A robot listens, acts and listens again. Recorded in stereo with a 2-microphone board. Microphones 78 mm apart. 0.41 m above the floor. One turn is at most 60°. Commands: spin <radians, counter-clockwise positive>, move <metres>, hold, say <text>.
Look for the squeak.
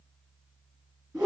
hold
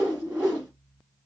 hold
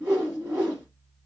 say I can't make out a squeak, only a whoosh.